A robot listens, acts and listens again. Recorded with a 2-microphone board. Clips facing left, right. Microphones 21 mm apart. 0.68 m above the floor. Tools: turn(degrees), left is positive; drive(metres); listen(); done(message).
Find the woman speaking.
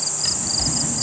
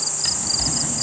listen()
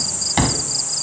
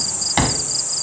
listen()
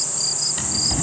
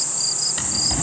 done("I can't make out a woman speaking to turn to.")